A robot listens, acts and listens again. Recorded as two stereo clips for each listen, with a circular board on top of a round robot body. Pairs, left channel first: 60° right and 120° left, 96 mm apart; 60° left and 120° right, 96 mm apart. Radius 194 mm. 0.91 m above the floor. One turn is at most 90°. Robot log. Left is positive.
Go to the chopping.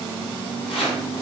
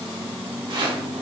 note: The chopping: 85° right.
cmd yaw -85
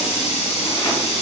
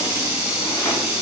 cmd idle
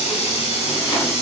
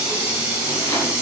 cmd idle
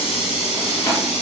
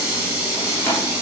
cmd fwd 1.0
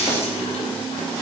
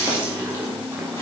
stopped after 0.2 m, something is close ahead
cmd idle
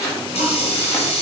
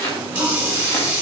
end: Blocked. The chopping is further on, straight ahead.